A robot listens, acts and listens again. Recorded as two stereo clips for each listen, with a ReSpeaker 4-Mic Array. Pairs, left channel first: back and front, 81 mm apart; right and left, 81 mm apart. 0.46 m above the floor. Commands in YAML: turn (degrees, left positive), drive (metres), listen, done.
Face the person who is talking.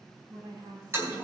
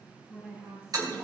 turn: 15
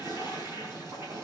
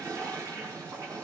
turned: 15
listen: true
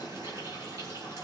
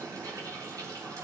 listen: true
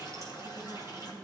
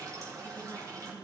done: "Facing where the woman speaking came from. I can't hear it now."